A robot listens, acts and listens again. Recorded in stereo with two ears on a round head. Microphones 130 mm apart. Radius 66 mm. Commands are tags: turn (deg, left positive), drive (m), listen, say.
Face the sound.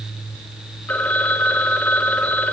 <turn deg="30"/>
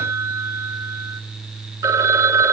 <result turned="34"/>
<turn deg="-25"/>
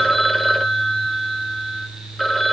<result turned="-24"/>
<say>Found it: a phone ringing, straight ahead, 1 to 2 m away.</say>